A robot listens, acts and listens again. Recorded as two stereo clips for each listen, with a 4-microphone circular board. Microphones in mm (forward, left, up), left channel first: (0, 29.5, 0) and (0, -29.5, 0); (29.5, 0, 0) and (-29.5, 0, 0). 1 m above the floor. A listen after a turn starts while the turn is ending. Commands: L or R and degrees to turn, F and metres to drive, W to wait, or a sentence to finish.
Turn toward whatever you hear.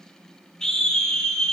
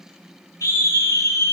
L10
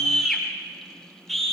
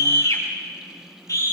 Facing the scream.